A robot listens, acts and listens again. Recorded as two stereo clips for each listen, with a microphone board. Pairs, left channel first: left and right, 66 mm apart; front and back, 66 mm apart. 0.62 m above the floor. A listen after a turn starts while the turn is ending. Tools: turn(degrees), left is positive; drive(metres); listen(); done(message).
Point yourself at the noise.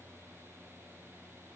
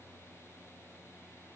listen()
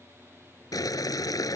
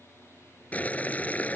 turn(degrees=65)
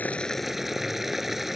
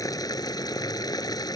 done("Facing the boiling.")